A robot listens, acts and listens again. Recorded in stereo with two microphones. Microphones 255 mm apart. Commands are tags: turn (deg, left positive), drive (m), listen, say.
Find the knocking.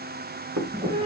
<turn deg="-90"/>
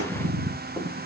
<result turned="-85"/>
<listen/>
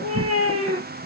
<listen/>
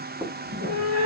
<say>Found it: knocking, straight ahead.</say>